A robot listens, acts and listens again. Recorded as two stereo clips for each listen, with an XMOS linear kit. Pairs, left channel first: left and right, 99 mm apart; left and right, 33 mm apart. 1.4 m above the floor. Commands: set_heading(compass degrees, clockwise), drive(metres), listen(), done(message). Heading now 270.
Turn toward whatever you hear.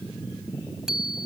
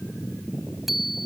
set_heading(300)
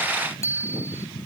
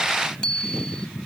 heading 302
set_heading(277)
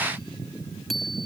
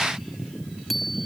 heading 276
done("Found it: a bicycle bell, straight ahead.")